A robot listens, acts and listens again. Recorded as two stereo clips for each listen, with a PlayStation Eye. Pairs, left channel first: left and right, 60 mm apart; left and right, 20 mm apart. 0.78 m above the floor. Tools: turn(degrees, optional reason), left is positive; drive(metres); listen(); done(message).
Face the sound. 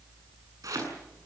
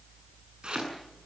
turn(degrees=-70, reason="The chopping: about 70° right or 110° right.")
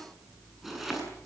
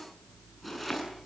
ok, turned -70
done("Found it: chopping, straight ahead.")